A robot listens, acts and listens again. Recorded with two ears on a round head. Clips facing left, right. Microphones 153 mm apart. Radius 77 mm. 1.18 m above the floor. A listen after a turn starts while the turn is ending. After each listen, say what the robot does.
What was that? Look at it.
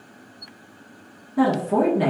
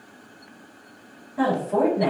Turn 65° left.
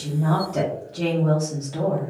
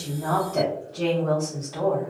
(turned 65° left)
Turn 30° left.
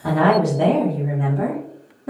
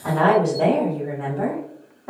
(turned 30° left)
Turn 35° left.
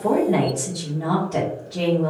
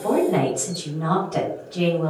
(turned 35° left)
Turn 20° left.
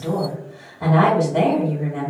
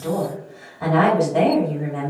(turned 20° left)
Facing the woman speaking, 1 to 2 m away.